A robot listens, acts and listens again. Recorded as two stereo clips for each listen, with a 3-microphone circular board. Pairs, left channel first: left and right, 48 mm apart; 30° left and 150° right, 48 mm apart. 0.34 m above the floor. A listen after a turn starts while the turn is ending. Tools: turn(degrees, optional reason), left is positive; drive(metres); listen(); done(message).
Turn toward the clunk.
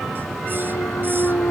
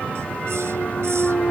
turn(degrees=90, reason="The clunk: 90° left.")
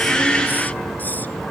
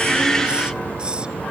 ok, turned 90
done("I heard a clunk from this way, but can't make it out now.")